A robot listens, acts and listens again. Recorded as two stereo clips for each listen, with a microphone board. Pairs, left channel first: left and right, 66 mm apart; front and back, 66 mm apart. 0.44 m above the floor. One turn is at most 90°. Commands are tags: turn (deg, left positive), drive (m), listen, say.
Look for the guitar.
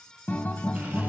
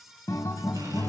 <turn deg="30"/>
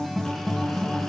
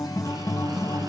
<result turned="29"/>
<say>Found it: a guitar, straight ahead.</say>